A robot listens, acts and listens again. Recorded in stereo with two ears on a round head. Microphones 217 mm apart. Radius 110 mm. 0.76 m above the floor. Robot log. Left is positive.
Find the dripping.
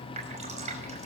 note: The dripping: about 30° right or 150° right.
cmd yaw -30
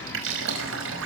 note: So it is at 120° right.
cmd yaw -120
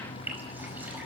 end: Found it: dripping, straight ahead, over 4 m away.